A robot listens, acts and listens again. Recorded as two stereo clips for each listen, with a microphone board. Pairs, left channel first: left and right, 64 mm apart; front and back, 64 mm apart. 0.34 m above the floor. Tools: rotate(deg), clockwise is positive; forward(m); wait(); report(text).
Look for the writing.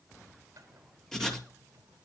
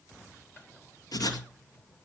rotate(-10)
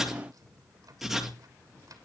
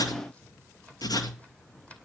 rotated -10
report("Facing the writing, 2 to 4 m away.")